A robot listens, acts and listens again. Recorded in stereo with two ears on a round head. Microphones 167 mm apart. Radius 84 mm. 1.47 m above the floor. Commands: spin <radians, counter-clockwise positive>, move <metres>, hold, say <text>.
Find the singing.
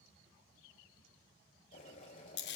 hold
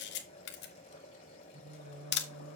spin -1.31
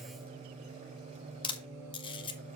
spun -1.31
spin -0.26
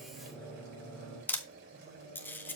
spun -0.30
say Found it: singing, straight ahead.